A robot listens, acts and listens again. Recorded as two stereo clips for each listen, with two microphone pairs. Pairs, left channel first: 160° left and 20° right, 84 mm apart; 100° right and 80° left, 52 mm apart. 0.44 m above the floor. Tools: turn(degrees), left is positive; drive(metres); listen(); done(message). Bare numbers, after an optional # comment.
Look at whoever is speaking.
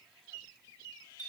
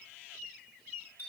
listen()
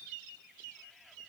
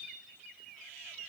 listen()
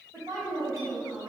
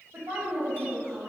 # The woman speaking: 35° left.
turn(35)
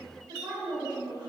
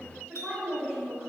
# The woman speaking is now 10° left.
turn(10)
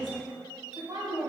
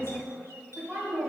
done("Found it: a woman speaking, straight ahead.")